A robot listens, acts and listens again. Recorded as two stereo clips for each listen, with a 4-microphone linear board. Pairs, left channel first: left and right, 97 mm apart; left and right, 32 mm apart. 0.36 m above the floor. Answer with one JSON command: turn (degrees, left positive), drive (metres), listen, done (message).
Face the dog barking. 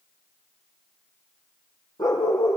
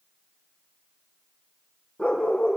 {"turn": 40}
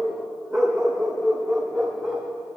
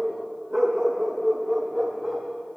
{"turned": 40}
{"done": "Facing the dog barking, over 4 m away."}